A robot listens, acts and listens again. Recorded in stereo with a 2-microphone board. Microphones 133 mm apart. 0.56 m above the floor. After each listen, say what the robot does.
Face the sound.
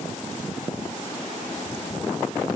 Keep listening.
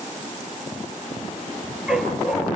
Turn 30° right.
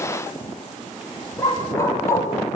Turn 20° left.
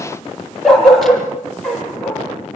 Found it: a dog barking, straight ahead.